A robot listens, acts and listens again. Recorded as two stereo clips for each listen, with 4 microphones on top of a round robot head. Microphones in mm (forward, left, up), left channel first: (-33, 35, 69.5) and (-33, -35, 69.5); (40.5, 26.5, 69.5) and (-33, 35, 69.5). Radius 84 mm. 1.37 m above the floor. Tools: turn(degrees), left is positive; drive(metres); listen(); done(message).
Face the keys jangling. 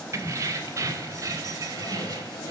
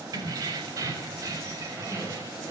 turn(degrees=-130)
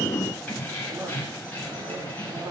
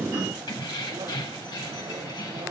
turn(degrees=25)
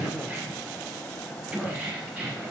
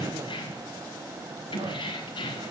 turn(degrees=-20)
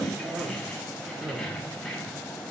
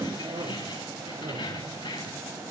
done("Found it: keys jangling, straight ahead.")